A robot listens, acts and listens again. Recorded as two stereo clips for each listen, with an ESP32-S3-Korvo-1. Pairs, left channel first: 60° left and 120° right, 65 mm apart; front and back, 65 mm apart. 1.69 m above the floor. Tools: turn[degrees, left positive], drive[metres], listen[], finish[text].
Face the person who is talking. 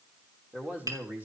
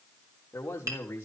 Thought: The man speaking: 60° right.
Action: turn[-60]
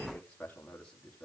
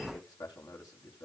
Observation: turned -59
Thought: The man speaking is now 15° right.
Action: turn[-15]
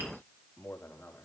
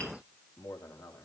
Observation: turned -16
Action: finish[Found it: a man speaking, straight ahead.]